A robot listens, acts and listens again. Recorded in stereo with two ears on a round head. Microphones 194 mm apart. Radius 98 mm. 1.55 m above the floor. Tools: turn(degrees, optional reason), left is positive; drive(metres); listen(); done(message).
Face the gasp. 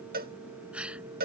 turn(degrees=-30)
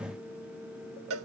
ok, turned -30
listen()
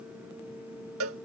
done("I heard a gasp, but can't make it out now. It was about 25° left or 145° right.")